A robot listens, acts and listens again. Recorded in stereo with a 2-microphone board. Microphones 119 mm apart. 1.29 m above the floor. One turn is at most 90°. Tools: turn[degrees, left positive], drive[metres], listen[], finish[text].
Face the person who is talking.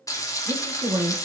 Thought: The woman speaking: about 60° right or 120° right.
Action: turn[-60]
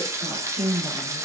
Thought: So it is at 60° right.
Action: turn[-60]
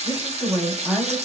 Action: finish[Found it: a woman speaking, straight ahead, 1 to 2 m away.]